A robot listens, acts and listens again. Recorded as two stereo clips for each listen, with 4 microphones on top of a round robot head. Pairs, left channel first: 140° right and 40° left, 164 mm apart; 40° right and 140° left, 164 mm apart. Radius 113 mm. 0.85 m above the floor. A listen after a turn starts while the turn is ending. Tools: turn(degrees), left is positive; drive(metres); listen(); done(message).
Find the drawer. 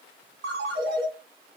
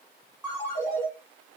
listen()
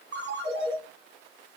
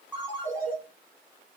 listen()
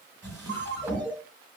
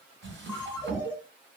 turn(degrees=110)
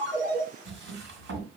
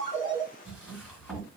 turn(degrees=45)
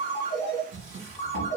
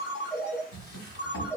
turn(degrees=-15)
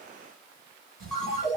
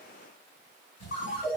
done("Facing the drawer, 2 to 4 m away.")